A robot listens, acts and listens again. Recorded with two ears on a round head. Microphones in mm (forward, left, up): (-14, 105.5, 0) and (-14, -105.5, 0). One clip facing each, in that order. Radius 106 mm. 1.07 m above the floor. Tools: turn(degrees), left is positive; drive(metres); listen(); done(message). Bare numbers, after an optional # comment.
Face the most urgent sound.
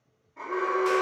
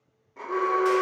# The alarm: about 60° right or 120° right.
turn(-60)
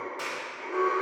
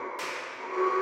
# So it is at 45° right.
turn(-45)
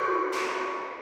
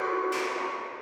# The alarm is now 15° right.
turn(-15)
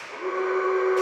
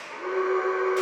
done("Facing the alarm, 2 to 4 m away.")